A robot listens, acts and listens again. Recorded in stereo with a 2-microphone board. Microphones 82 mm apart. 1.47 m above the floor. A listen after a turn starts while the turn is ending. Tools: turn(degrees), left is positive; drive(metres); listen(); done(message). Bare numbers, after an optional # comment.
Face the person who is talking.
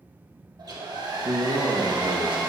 # The man speaking: about 70° right or 110° right.
turn(-70)
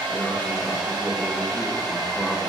listen()
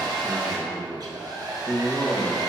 done("Found it: a man speaking, straight ahead.")